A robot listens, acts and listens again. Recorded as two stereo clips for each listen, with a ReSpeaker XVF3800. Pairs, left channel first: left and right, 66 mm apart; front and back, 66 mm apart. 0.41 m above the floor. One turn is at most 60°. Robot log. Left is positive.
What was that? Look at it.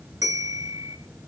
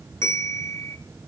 note: The bell: 50° right.
cmd yaw -50
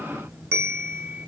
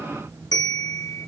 note: The bell is now 30° right.
cmd yaw -30
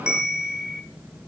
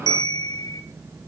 note: The bell is now 10° right.
cmd yaw -10
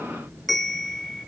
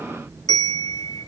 end: Found it: a bell, straight ahead.